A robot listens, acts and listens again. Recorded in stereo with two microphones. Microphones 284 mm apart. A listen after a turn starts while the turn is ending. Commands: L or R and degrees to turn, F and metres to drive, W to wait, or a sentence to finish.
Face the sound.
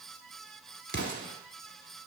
L40
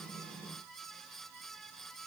W
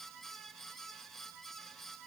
I heard an explosion, but can't make it out now. It was about straight ahead or 100° left.